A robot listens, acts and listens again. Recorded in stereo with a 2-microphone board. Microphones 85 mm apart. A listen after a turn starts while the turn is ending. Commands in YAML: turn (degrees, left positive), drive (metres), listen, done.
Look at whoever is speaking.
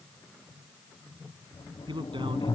turn: -90
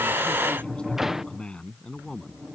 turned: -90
turn: 10
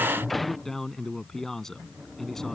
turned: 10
done: "Facing the man speaking."